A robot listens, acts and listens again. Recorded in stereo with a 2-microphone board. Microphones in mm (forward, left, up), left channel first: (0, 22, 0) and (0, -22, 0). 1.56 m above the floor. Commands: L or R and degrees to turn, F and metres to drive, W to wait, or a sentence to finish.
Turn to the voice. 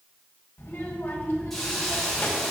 L60
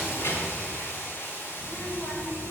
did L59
L65
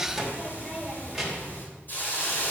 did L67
Found it: a child speaking, straight ahead.